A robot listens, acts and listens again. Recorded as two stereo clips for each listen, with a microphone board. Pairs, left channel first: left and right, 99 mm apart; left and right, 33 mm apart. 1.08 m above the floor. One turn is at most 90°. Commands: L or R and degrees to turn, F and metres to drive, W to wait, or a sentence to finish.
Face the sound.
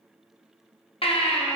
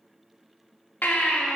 L70
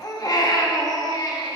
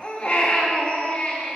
L40
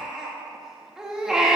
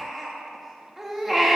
Facing the baby crying, 1 to 2 m away.